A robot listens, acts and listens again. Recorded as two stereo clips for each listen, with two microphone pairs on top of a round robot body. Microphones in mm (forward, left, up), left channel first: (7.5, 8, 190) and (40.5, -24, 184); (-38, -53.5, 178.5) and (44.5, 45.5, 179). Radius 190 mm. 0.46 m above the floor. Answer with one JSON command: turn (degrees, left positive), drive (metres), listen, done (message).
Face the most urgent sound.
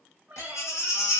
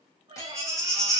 {"turn": 120}
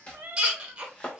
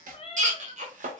{"turn": 25}
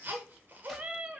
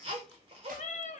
{"done": "Facing the baby crying, 1 to 2 m away."}